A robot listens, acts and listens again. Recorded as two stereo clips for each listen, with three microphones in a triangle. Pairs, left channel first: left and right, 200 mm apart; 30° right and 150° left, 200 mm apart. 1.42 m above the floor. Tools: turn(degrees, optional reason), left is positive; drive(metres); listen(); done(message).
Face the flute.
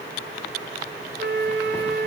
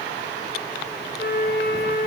turn(degrees=-65, reason="The flute: 65° right.")
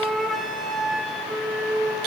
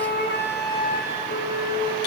done("Found it: a flute, straight ahead, over 4 m away.")